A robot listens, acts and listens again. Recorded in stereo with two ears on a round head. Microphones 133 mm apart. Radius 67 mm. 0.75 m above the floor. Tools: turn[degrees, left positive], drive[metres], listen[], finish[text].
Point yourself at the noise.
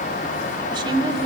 Thought: The woman speaking: about 30° right or 150° right.
Action: turn[-30]
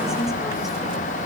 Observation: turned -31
Action: listen[]
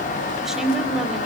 Action: finish[Found it: a woman speaking, straight ahead, 2 to 4 m away.]